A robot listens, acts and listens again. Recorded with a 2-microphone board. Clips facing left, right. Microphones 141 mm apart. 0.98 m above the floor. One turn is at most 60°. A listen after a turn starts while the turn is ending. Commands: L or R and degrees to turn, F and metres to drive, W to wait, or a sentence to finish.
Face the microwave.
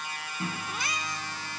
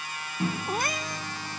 R20
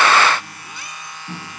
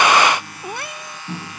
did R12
R10
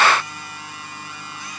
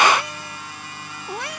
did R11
W
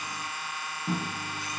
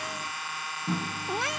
Facing the microwave.